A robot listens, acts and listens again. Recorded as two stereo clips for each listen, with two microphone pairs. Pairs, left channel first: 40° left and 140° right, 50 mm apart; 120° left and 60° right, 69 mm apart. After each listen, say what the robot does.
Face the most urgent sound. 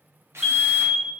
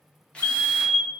Turn 160° left.
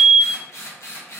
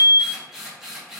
Turn 15° right.
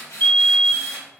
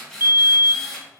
Found it: a fire alarm, straight ahead.